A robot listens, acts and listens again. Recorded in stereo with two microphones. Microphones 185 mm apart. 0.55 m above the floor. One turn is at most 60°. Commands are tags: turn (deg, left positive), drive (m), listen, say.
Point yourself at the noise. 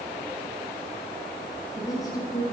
<turn deg="20"/>
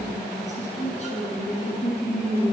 <turn deg="60"/>
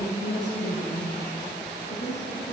<turn deg="60"/>
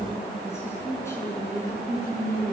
<turn deg="15"/>
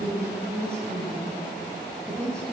<say>Found it: a woman speaking, straight ahead, over 4 m away.</say>